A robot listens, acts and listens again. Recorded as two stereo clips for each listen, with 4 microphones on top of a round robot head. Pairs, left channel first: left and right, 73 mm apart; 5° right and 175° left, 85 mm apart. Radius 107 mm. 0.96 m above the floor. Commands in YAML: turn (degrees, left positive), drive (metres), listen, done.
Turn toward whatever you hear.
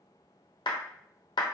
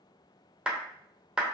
turn: 95
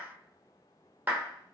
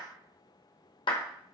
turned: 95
turn: -25
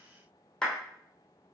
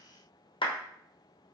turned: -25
turn: 10
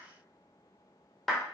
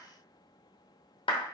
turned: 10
done: "Facing the clap."